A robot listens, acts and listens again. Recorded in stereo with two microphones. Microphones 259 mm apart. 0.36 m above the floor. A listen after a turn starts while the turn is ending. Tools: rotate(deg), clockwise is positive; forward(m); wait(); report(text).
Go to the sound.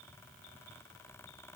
wait()
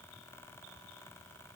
wait()
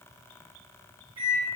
rotate(65)
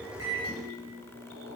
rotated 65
rotate(40)
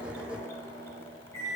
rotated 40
rotate(-10)
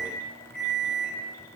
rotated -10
forward(1.0)
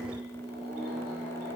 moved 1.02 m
forward(1.0)
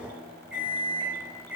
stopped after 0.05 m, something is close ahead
report("I am next to the microwave.")